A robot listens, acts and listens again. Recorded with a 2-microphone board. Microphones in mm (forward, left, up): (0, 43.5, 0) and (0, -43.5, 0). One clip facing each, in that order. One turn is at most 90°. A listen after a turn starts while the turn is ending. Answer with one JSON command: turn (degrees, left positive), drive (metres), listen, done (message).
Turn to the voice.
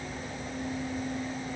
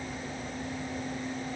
{"listen": true}
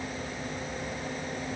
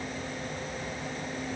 {"listen": true}
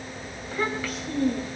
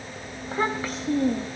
{"turn": -35}
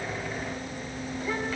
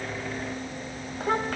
{"turn": -90}
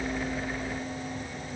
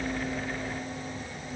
{"turn": -15}
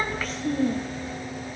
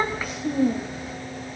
{"turn": -10}
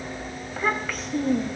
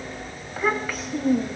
{"done": "Found it: a child speaking, straight ahead, 1 to 2 m away."}